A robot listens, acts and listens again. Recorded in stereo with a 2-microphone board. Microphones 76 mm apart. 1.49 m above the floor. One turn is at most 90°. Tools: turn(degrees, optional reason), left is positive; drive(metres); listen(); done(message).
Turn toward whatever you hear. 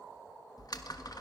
turn(degrees=60, reason="The typing on a keyboard: about 60° left or 120° left.")
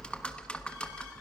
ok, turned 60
turn(degrees=15, reason="So it is at 15° left.")
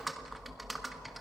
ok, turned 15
done("Facing the typing on a keyboard, 1 to 2 m away.")